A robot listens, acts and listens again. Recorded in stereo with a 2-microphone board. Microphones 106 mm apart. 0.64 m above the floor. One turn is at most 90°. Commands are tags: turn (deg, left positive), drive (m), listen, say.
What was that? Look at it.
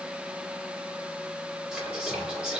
<turn deg="-30"/>
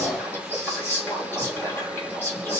<turn deg="25"/>
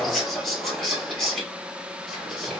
<say>Facing the whispering, 1 to 2 m away.</say>